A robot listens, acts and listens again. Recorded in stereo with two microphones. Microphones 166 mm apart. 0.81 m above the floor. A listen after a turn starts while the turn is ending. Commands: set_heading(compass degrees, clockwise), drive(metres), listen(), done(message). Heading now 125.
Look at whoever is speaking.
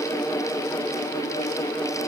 listen()
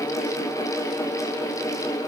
listen()
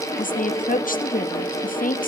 set_heading(70)
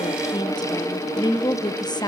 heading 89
set_heading(59)
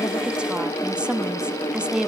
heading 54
done("Facing the woman speaking.")